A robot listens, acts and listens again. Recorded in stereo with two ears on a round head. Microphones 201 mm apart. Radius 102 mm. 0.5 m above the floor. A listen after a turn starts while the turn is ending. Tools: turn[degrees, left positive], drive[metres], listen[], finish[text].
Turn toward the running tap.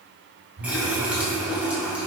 Action: turn[-30]
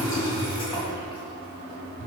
Thought: So it is at 25° left.
Action: turn[25]
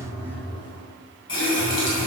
Thought: The running tap is now 20° left.
Action: turn[20]
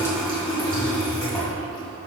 Action: finish[Facing the running tap, 2 to 4 m away.]